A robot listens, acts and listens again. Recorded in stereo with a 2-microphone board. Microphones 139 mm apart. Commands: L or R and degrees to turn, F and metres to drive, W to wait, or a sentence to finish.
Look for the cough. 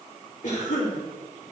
L65
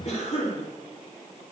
L50
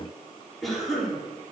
Facing the cough.